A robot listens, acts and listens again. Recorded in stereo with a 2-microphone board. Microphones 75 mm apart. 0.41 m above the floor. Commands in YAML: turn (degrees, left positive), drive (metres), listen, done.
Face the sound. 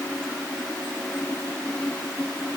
listen: true
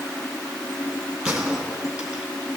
turn: -30
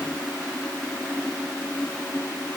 listen: true
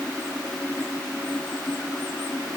done: "I heard a gunshot, but can't make it out now. It was about 20° left or 140° right."